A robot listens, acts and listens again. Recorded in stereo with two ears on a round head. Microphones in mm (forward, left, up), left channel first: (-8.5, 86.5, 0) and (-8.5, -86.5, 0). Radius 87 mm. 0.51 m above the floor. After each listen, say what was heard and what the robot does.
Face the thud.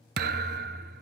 The thud: about 55° right or 125° right. Turn 55° right.
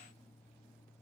Keep listening.
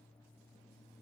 I heard a thud, but can't make it out now. It was about straight ahead or 70° right.